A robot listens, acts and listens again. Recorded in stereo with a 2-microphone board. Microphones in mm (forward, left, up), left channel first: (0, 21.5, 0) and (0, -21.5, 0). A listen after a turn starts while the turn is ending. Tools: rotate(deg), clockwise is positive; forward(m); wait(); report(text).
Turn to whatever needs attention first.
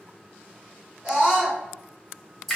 rotate(25)
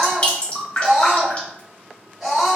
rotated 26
report("Found it: a scream, straight ahead.")